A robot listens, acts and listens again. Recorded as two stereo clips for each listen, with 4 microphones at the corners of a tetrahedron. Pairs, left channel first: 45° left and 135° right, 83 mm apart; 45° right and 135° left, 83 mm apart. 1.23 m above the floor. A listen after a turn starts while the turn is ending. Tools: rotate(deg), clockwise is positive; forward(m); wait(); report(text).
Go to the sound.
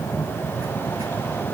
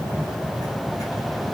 wait()
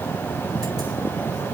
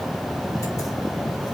wait()
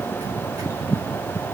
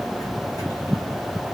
report("I can't make out anything.")